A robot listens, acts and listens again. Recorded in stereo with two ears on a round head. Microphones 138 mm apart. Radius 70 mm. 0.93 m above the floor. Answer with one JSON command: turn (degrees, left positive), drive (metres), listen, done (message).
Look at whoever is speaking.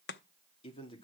{"turn": 35}
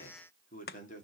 {"turn": 125}
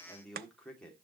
{"done": "Found it: a man speaking, straight ahead."}